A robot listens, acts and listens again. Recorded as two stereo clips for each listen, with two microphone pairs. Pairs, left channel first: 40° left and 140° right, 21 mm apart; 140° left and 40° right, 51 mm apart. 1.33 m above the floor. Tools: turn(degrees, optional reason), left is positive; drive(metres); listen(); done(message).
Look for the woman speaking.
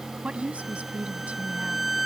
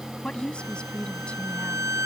turn(degrees=-150, reason="The woman speaking: 150° right.")
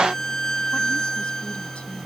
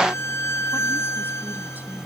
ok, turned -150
listen()
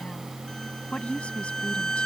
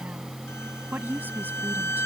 turn(degrees=15, reason="The woman speaking is now 15° left.")
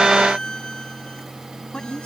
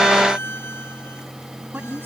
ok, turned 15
turn(degrees=10, reason="The woman speaking is now 10° left.")
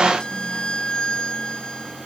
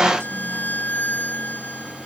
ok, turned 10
listen()
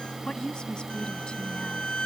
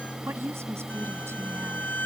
done("Facing the woman speaking.")